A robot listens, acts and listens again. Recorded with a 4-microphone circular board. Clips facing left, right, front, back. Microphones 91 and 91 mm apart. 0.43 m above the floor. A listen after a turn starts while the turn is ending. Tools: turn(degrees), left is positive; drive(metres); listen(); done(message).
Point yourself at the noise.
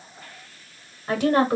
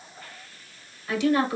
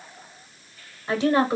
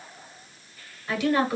turn(degrees=60)
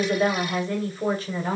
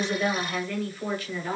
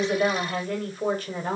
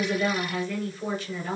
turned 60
turn(degrees=40)
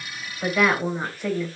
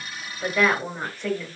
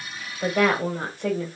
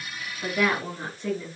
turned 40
turn(degrees=10)
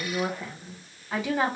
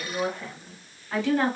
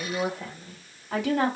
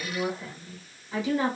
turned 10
turn(degrees=10)
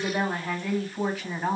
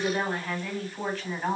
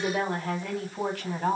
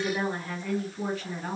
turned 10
done("Found it: a woman speaking, straight ahead, 2 to 4 m away.")